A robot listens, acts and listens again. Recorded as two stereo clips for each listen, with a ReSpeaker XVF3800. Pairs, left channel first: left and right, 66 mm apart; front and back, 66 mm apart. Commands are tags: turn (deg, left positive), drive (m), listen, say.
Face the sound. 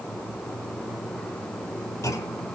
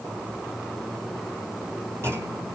<turn deg="130"/>
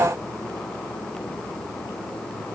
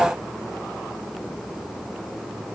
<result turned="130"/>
<say>I heard a clunk from this way, but can't make it out now.</say>